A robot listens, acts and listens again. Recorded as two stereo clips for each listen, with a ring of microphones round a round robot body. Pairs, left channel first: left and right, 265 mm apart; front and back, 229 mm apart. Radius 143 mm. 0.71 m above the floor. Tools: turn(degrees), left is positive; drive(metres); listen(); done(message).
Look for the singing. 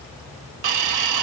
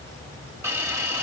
listen()
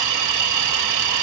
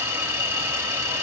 listen()
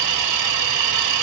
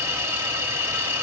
done("I can't make out singing, only a hiss.")